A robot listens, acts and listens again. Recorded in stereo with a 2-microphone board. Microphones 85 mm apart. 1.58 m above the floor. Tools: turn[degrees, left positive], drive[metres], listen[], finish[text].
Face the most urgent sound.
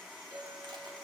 Action: listen[]
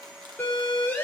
Thought: The siren: about 20° left or 160° left.
Action: turn[20]
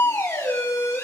Thought: So it is at 140° left.
Action: turn[140]
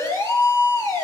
Thought: The siren is now 40° left.
Action: turn[40]
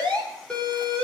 Thought: The siren is now 15° left.
Action: turn[15]
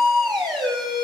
Action: finish[Facing the siren, over 4 m away.]